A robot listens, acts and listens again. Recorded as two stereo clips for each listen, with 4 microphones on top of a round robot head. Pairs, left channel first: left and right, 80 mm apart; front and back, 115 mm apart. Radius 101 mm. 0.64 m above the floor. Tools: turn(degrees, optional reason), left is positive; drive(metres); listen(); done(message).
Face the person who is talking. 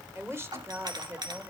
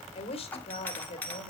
turn(degrees=-35, reason="The woman speaking: 35° right.")
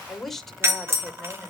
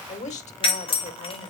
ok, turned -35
done("Found it: a woman speaking, straight ahead, 2 to 4 m away.")